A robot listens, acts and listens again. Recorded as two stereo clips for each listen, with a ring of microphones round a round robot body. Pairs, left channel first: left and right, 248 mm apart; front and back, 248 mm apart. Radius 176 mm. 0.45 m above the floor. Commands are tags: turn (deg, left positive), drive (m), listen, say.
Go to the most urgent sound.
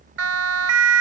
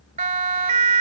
<turn deg="-115"/>
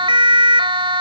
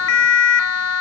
<turn deg="-20"/>
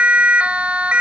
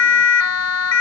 <drive m="1.0"/>
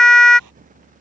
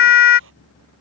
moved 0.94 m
<drive m="1.0"/>
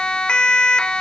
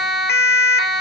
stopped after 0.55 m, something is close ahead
<say>Arrived at the siren, straight ahead.</say>